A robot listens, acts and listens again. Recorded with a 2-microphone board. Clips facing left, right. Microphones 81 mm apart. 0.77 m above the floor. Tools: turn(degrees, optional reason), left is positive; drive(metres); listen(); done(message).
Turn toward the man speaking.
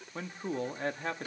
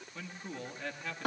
turn(degrees=40, reason="The man speaking: about 40° left or 140° left.")
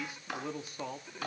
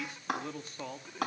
done("Facing the man speaking.")